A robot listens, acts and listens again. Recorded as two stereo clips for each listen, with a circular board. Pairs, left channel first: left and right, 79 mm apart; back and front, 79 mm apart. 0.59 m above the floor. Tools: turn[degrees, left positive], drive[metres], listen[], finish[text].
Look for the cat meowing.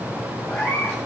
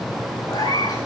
Thought: The cat meowing: 170° left.
Action: turn[170]
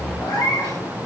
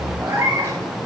Thought: The cat meowing is now 55° left.
Action: turn[55]
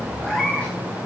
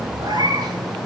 Thought: The cat meowing is now 15° left.
Action: turn[15]
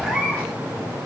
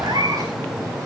Action: finish[Found it: a cat meowing, straight ahead, over 4 m away.]